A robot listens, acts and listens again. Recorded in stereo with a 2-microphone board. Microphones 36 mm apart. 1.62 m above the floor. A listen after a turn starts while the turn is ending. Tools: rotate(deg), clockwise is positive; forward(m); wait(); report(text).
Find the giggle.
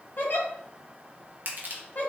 rotate(-55)
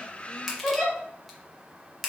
rotate(-15)
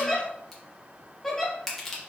report("Facing the giggle.")